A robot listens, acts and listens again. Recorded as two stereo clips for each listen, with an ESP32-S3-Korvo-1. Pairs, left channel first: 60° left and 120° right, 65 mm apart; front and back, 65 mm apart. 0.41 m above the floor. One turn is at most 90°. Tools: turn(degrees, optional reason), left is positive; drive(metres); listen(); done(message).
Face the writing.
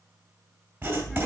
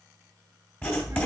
turn(degrees=-60, reason="The writing: 60° right.")
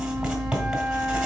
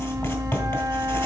turn(degrees=-40, reason="The writing is now 40° right.")
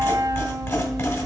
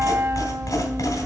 turn(degrees=15, reason="The writing is now 15° left.")
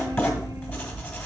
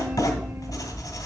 done("Facing the writing.")